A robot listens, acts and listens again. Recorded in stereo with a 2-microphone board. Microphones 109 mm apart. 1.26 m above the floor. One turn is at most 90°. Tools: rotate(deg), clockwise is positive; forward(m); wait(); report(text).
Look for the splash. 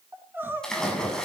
rotate(-30)
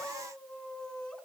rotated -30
wait()
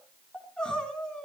report("I heard a splash, but can't make it out now. It was about 25° right or 145° left.")